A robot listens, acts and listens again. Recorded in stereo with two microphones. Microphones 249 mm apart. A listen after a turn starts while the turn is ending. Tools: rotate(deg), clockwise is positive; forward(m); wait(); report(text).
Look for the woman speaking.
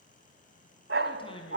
rotate(-20)
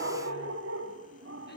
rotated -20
wait()
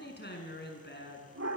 rotate(-135)
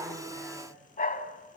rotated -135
wait()
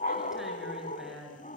report("Found it: a woman speaking, straight ahead.")